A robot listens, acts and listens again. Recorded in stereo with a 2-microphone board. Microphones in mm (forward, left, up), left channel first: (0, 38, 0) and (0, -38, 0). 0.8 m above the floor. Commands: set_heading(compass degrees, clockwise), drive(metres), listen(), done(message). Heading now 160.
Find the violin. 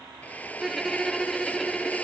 set_heading(130)
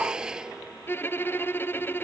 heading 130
set_heading(340)
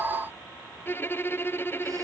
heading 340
set_heading(310)
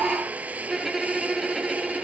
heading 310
done("Facing the violin.")